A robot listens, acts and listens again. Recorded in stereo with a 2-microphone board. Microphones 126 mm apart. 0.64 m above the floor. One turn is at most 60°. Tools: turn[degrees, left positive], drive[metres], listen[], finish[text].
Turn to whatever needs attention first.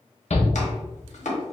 Thought: The shout: about 55° left or 125° left.
Action: turn[55]
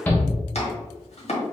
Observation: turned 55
Thought: So it is at 15° left.
Action: turn[15]
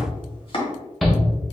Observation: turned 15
Action: finish[Facing the shout, 1 to 2 m away.]